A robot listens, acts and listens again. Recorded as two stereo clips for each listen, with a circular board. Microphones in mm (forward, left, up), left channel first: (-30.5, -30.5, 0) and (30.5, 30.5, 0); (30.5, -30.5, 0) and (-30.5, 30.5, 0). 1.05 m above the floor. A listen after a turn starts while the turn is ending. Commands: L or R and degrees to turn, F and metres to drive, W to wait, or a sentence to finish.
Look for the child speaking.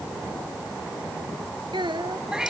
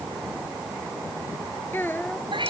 L20
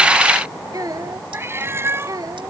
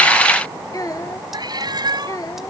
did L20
Facing the child speaking.